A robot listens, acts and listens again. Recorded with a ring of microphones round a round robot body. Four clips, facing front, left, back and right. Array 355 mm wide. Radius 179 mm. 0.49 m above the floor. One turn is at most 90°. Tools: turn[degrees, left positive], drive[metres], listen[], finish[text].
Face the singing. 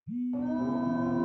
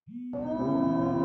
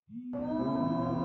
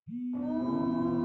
Thought: The singing: 95° left.
Action: turn[90]
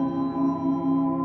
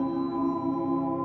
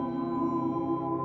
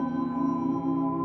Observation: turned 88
Action: finish[Found it: singing, straight ahead.]